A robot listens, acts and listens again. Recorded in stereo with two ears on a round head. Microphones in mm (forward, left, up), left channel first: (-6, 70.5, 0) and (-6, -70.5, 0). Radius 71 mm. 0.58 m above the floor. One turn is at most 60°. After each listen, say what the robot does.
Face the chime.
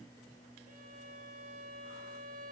Keep listening.
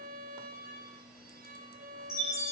Turn 15° left.
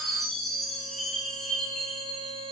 Facing the chime.